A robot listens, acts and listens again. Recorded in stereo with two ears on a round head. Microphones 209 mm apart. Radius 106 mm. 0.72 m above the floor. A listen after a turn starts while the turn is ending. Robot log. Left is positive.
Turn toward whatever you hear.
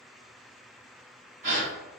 note: The gasp: about 30° right or 150° right.
cmd yaw -30
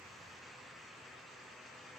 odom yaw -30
cmd idle
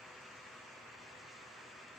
end: I heard a gasp, but can't make it out now. It was about straight ahead or 120° right.